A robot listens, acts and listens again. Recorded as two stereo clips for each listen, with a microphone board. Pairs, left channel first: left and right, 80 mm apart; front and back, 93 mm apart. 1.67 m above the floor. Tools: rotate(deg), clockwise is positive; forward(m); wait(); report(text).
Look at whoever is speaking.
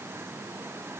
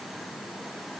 wait()
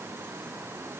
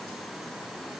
wait()
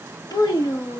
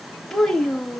rotate(-85)
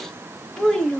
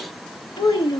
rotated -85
rotate(-10)
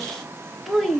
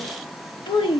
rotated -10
report("Found it: a child speaking, straight ahead.")